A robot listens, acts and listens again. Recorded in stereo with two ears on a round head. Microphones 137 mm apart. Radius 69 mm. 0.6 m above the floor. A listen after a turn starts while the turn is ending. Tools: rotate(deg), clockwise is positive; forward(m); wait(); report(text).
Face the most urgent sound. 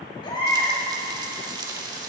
rotate(-35)
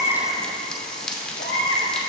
rotate(-115)
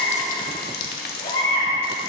rotate(-40)
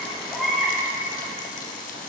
report("Found it: a baby crying, straight ahead.")